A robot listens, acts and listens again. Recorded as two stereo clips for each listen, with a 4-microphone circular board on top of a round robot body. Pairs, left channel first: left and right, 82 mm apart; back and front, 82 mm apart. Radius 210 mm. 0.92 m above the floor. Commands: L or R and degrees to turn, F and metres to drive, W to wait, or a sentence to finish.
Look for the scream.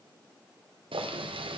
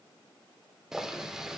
W
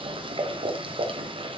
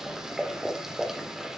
W
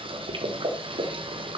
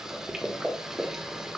I can't make out a scream to turn to.